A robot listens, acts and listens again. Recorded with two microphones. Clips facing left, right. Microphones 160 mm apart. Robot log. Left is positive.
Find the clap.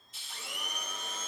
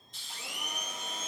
cmd idle
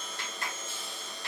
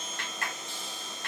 note: The clap: about 65° right or 115° right.
cmd yaw -65
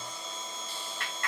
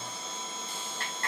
note: So it is at 45° right.
cmd yaw -45
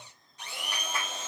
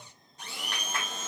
end: Found it: a clap, straight ahead.